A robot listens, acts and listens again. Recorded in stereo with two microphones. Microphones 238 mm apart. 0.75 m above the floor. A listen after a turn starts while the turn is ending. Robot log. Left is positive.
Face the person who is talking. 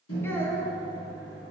cmd yaw +30
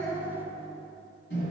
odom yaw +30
note: So it is at 20° right.
cmd yaw -20
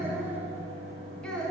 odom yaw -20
end: Found it: a child speaking, straight ahead, 1 to 2 m away.